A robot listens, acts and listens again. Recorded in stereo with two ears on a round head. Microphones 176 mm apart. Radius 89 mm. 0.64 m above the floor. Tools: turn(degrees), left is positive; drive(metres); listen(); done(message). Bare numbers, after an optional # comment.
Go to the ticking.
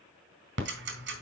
# The ticking: about 65° right or 115° right.
turn(-65)
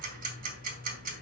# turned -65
# So it is at 50° right.
turn(-50)
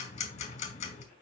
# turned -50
# The ticking is now 35° left.
turn(35)
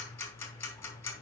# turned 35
# The ticking is now 15° left.
turn(15)
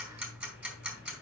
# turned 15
drive(1.0)
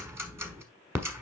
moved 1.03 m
# The ticking is now 10° right.
turn(-10)
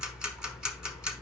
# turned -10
drive(1.0)
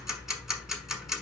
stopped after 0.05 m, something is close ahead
done("I am next to the ticking.")